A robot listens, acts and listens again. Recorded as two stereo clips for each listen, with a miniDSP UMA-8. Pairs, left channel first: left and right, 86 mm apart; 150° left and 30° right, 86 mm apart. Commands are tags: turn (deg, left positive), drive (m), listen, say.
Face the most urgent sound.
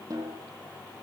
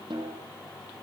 <listen/>
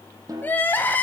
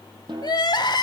<turn deg="155"/>
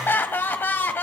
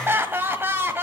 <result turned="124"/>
<turn deg="30"/>
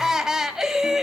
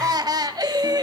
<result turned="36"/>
<turn deg="-10"/>
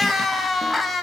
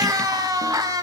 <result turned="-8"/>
<say>Facing the crying, 1 to 2 m away.</say>